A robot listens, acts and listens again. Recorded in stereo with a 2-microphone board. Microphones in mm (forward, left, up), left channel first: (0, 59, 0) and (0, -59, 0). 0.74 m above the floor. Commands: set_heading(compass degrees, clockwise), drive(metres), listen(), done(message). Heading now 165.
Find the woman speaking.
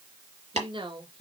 set_heading(215)
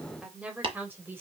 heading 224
set_heading(244)
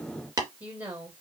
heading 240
set_heading(255)
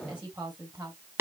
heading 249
set_heading(264)
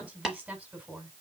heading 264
done("Facing the woman speaking.")